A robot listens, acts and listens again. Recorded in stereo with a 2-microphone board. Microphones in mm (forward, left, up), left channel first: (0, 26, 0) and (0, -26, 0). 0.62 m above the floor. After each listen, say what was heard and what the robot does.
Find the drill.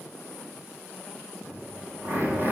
The drill: about 45° right or 135° right. Turn 45° right.
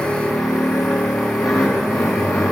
Found it: a drill, straight ahead.